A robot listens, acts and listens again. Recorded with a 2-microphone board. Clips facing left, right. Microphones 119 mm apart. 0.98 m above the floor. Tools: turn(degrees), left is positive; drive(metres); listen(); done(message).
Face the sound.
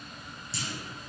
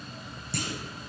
turn(degrees=-60)
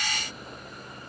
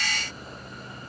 listen()
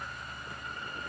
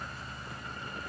done("I heard a clunk, but can't make it out now. It was about straight ahead or 60° right.")